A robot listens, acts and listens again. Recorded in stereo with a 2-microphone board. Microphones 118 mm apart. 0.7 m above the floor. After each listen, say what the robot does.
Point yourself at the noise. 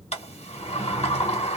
Turn 70° left.
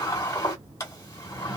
Turn 30° left.
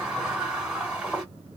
Facing the sliding door, 1 to 2 m away.